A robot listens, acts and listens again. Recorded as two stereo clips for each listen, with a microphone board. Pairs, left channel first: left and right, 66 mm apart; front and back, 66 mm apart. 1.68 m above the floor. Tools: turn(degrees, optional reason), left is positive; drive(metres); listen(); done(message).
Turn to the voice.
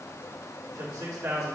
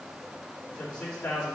turn(degrees=-70, reason="The man speaking: 70° right.")
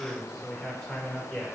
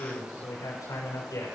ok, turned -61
done("Facing the man speaking.")